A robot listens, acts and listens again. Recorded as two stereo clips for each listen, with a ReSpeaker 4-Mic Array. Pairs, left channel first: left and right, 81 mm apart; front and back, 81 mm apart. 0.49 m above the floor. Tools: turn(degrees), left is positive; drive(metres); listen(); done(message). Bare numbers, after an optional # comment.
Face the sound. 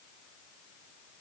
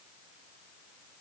listen()
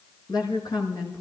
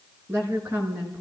# The woman speaking: 120° left.
turn(120)
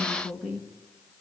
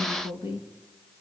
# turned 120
done("Found it: a woman speaking, straight ahead.")